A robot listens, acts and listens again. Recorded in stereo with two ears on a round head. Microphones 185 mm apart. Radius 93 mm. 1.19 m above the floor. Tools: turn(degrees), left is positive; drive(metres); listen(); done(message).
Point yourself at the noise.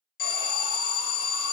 turn(degrees=45)
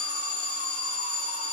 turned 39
turn(degrees=95)
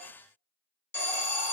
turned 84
turn(degrees=10)
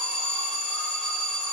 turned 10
done("Found it: an alarm, straight ahead.")